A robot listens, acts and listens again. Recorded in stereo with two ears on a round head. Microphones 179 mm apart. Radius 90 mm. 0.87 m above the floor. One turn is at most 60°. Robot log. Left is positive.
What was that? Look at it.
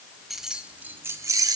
note: The keys jangling: about 20° right or 160° right.
cmd yaw -20
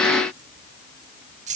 note: The keys jangling: about 35° right or 145° right.
cmd yaw -35
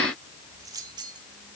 note: The keys jangling: about 20° right or 160° right.
cmd yaw -20
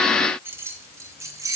note: The keys jangling: about 15° right or 165° right.
cmd yaw -15
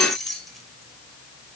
end: Found it: keys jangling, straight ahead, 2 to 4 m away.